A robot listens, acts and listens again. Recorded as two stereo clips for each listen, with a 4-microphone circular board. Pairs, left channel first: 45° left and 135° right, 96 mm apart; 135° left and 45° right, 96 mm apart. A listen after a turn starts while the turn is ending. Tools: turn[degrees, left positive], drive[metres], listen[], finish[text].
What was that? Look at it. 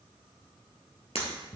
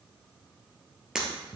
Thought: The breaking glass: 40° left.
Action: turn[40]
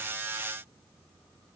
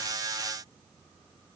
Action: finish[Facing where the breaking glass came from. I can't hear it now.]